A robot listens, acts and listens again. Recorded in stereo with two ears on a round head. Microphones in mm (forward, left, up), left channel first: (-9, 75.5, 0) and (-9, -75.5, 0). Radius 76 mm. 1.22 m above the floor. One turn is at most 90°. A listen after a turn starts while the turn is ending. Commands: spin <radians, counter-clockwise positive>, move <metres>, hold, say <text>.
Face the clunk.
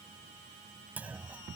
spin -0.52
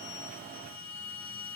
hold
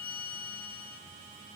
say I heard a clunk, but can't make it out now. It was about 20° left or 140° right.